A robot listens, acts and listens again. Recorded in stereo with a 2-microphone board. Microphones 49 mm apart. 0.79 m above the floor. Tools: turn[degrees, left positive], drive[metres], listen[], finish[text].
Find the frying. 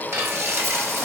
Thought: The frying: about 70° right or 110° right.
Action: turn[-70]
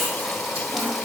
Action: listen[]
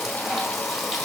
Action: listen[]
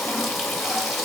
Action: finish[I heard frying, but can't make it out now. It was about straight ahead or 40° right.]